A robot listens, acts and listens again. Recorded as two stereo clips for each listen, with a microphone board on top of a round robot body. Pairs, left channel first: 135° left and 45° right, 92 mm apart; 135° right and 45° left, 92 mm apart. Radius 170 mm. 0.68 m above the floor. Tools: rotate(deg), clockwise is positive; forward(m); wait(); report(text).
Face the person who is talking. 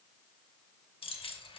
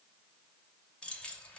wait()
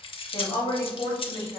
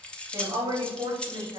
rotate(-80)
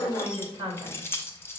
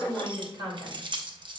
report("Facing the woman speaking.")